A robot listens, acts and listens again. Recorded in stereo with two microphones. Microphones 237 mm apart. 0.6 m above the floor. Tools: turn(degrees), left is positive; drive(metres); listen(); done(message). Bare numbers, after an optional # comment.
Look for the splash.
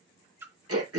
turn(-30)
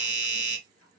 listen()
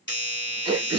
done("I heard a splash, but can't make it out now. It was about 20° left or 140° right.")